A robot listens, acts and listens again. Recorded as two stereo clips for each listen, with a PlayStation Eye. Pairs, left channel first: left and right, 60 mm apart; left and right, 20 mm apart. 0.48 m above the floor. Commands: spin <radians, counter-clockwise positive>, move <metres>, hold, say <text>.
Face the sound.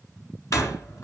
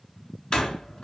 spin 1.05
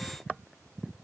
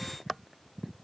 hold
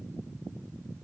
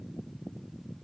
say I heard a door slam, but can't make it out now. It was about straight ahead or 60° left.